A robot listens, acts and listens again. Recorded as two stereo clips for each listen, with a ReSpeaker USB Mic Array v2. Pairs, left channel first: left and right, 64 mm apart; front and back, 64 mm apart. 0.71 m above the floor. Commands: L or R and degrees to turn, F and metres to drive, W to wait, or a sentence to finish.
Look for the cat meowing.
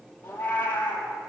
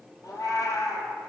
L25
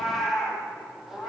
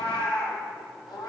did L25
Facing the cat meowing, over 4 m away.